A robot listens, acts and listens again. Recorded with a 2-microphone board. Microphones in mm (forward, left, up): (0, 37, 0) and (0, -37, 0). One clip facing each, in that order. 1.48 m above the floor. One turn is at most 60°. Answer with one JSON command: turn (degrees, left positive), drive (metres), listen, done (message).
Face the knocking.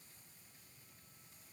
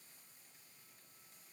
{"listen": true}
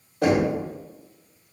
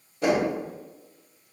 {"turn": 60}
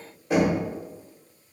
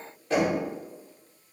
{"turn": 15}
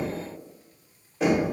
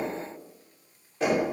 {"done": "Facing the knocking, 1 to 2 m away."}